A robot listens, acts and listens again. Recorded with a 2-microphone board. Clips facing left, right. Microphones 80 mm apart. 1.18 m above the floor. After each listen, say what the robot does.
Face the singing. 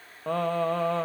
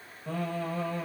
Turn 70° left.
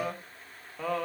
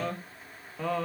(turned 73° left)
Found it: singing, straight ahead.